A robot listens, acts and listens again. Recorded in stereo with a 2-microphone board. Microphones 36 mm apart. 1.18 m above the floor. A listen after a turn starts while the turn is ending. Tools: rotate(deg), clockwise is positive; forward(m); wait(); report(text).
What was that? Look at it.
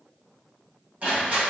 rotate(40)
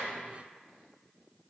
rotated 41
wait()
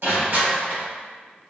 rotate(100)
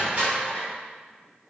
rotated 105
report("Found it: crushing, straight ahead.")